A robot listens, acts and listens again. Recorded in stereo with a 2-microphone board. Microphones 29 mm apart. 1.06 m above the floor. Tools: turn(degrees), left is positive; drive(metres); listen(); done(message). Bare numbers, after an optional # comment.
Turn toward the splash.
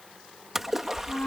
# The splash: about 15° right or 165° right.
turn(-15)
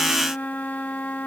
listen()
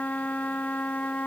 done("I heard a splash, but can't make it out now. It was about straight ahead or 150° right.")